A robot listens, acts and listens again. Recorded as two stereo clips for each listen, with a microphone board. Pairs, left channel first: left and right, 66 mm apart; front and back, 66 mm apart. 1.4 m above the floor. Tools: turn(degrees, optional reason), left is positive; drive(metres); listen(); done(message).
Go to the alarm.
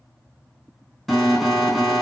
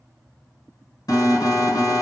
drive(metres=1.0)
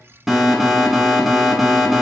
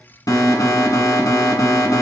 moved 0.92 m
drive(metres=1.0)
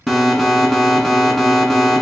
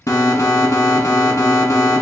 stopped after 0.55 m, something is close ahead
done("I am next to the alarm.")